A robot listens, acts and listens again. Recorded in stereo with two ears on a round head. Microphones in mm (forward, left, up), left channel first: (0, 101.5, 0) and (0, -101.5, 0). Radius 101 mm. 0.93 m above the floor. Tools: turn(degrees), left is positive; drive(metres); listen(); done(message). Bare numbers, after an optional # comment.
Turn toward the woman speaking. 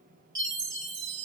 listen()
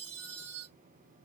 listen()
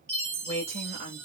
# The woman speaking: about 30° right or 150° right.
turn(-30)
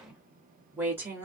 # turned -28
# So it is at 10° right.
turn(-10)
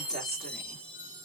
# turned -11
listen()
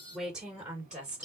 done("Facing the woman speaking, 2 to 4 m away.")